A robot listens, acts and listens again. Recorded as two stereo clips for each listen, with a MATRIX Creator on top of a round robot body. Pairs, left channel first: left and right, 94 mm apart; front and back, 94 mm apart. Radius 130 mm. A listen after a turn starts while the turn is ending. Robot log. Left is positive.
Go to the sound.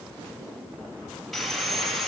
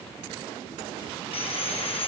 cmd fwd 1.0
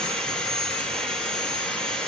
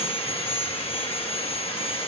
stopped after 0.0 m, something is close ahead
note: The sawing is now 10° left.
cmd yaw +10
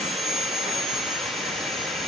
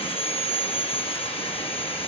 end: Blocked. The sawing is further on, straight ahead.